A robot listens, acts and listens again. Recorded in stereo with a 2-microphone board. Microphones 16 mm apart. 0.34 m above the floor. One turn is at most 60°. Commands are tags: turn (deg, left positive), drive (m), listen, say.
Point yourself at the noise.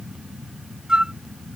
<turn deg="-55"/>
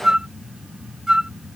<turn deg="-55"/>
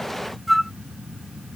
<say>Facing the flute.</say>